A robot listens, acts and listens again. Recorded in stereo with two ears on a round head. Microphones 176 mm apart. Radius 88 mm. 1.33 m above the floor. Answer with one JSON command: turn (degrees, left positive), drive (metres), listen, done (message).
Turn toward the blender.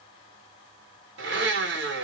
{"turn": -60}
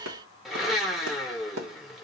{"done": "Facing the blender."}